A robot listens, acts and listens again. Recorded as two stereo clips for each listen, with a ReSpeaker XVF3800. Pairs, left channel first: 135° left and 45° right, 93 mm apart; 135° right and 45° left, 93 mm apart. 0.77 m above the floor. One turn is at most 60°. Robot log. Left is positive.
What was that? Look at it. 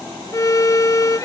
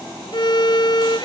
note: The violin: 170° right.
cmd yaw -60
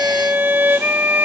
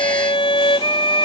note: The violin is now 115° right.
cmd yaw -60
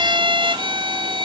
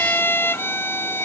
note: The violin is now 70° right.
cmd yaw -60
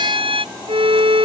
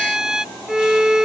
note: The violin is now 40° right.
cmd yaw -40
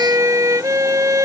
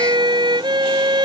note: The violin is now 10° left.
cmd yaw +10
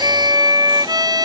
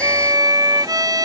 end: Found it: a violin, straight ahead.